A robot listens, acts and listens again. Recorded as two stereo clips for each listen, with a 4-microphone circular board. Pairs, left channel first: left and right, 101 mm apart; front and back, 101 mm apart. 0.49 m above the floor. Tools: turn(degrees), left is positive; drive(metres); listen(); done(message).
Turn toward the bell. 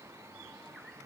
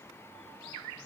listen()
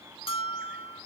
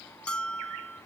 turn(degrees=80)
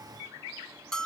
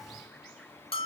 done("Found it: a bell, straight ahead, under 1 m away.")